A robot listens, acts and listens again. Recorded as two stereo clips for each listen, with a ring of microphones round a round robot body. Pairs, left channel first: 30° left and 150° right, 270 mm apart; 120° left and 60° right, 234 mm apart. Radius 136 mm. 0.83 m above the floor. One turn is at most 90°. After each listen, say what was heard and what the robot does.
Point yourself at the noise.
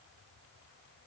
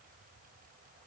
Keep listening.
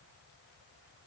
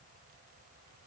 Keep listening.
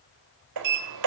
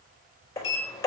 The sliding door: 160° right. Turn 90° right.
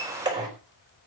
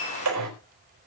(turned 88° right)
The sliding door is now 75° right. Turn 75° right.
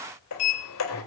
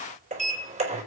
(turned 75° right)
Found it: a sliding door, straight ahead, over 4 m away.